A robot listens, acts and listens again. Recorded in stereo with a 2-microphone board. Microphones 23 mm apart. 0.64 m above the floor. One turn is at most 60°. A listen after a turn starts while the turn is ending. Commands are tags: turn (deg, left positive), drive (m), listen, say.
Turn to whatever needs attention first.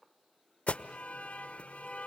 <turn deg="60"/>
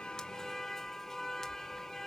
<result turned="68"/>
<turn deg="20"/>
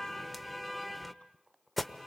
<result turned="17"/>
<say>Facing the alarm.</say>